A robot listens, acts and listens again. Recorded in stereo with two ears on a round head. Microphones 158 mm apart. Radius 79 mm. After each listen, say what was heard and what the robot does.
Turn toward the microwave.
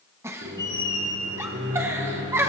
Turn 90° right.
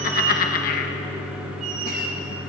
So it is at 10° right. Turn 10° right.
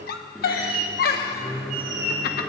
Found it: a microwave, straight ahead.